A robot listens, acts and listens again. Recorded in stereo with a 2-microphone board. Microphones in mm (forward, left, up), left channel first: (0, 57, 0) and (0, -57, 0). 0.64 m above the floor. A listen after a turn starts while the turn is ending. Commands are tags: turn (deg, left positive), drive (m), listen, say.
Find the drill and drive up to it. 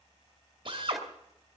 <turn deg="-50"/>
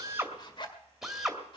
<drive m="1.0"/>
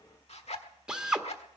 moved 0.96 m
<turn deg="-10"/>
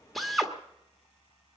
<drive m="1.0"/>
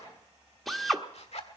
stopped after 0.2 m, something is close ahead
<say>Arrived at the drill, straight ahead.</say>